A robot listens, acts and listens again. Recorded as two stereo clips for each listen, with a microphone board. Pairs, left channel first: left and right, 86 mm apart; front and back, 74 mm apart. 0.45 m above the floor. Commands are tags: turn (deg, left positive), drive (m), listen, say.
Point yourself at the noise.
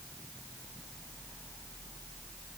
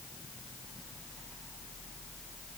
<listen/>
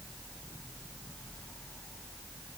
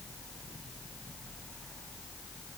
<listen/>
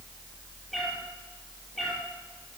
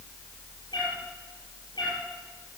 <say>Found it: a cat meowing, straight ahead, over 4 m away.</say>